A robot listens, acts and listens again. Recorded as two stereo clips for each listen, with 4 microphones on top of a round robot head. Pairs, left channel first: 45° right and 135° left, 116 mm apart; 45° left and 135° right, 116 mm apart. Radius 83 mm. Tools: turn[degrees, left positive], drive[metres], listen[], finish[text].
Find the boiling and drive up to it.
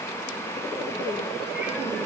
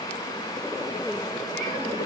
Action: listen[]
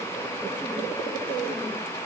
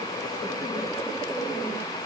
Action: listen[]
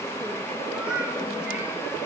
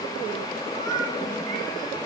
Action: finish[I can't make out boiling to turn to.]